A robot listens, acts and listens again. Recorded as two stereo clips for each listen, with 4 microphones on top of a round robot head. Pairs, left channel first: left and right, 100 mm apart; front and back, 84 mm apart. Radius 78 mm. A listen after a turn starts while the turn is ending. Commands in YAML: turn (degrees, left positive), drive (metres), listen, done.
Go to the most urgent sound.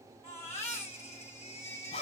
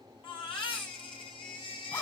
turn: 20
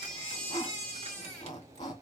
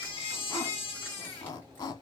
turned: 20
drive: 1.0
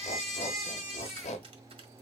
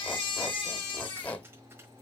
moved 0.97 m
drive: 1.0
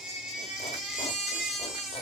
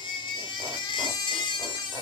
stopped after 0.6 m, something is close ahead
done: "I am next to the baby crying."